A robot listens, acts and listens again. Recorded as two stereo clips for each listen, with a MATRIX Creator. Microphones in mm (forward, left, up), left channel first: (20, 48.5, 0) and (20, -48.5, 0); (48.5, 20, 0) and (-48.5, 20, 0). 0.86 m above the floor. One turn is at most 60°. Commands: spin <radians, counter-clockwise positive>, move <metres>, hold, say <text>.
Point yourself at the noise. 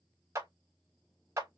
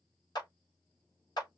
spin -0.61
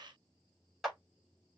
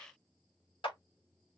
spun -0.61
say Found it: a clap, straight ahead, 1 to 2 m away.